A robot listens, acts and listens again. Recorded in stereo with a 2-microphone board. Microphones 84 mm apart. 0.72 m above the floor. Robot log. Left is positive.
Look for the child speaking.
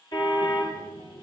note: The child speaking: about 70° left or 110° left.
cmd yaw +70
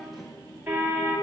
note: So it is at 35° left.
cmd yaw +35
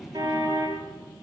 end: Found it: a child speaking, straight ahead.